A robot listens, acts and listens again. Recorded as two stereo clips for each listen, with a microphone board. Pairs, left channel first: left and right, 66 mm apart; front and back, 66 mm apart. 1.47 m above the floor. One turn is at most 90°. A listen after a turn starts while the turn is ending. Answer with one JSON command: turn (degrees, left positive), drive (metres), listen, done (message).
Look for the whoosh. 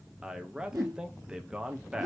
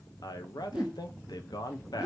{"turn": -90}
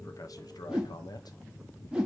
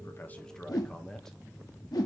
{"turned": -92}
{"turn": -10}
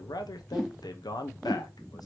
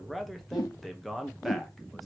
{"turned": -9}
{"done": "Found it: a whoosh, straight ahead, 1 to 2 m away."}